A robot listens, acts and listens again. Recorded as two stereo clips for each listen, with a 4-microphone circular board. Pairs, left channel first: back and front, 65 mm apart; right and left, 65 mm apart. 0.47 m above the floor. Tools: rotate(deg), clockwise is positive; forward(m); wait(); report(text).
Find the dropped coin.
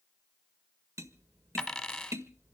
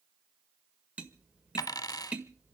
rotate(100)
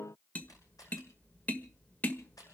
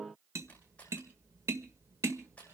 report("Facing where the dropped coin came from. I can't hear it now.")